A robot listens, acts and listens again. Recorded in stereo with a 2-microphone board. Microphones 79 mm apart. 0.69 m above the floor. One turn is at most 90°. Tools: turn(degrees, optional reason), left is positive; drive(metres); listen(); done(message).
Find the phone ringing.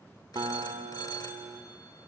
turn(degrees=55, reason="The phone ringing: about 55° left or 125° left.")
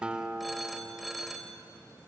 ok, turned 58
done("Facing the phone ringing.")